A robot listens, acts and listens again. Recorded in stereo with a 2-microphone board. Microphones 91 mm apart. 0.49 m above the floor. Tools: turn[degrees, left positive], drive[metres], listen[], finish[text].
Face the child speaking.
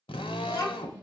Thought: The child speaking: about 35° left or 145° left.
Action: turn[35]
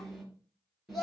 Action: finish[Facing the child speaking, over 4 m away.]